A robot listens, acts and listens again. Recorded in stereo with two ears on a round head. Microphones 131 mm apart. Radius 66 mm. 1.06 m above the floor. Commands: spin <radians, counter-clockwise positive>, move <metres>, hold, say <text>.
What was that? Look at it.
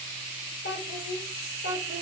spin 1.57
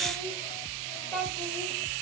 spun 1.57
say Found it: a child speaking, straight ahead.